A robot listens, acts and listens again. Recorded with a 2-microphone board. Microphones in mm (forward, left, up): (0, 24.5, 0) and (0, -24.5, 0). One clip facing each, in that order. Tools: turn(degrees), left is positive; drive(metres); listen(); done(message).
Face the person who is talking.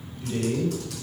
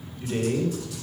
turn(degrees=-30)
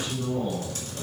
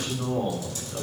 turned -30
turn(degrees=-120)
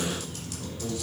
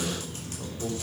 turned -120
turn(degrees=-35)
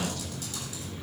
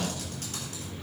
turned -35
turn(degrees=-15)
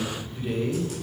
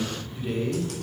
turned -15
done("Facing the man speaking.")